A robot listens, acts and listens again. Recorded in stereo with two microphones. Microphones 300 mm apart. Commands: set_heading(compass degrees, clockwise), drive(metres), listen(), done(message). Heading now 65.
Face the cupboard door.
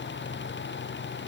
listen()
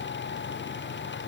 listen()
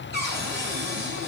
set_heading(100)
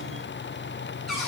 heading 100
done("Facing the cupboard door.")